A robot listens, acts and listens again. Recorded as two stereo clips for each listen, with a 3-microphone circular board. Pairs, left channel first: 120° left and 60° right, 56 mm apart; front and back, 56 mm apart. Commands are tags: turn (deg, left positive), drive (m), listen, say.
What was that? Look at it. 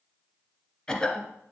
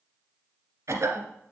<turn deg="-170"/>
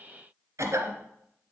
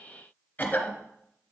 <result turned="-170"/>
<turn deg="-60"/>
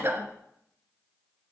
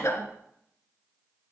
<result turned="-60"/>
<turn deg="-30"/>
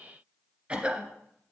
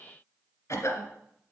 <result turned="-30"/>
<say>Facing the cough, 1 to 2 m away.</say>